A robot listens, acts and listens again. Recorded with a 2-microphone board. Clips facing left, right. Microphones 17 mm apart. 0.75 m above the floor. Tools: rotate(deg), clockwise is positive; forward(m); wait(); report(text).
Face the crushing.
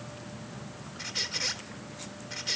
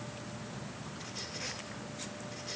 wait()
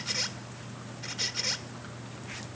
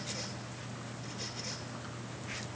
wait()
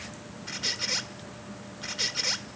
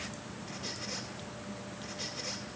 report("I can't make out crushing, only a squeak.")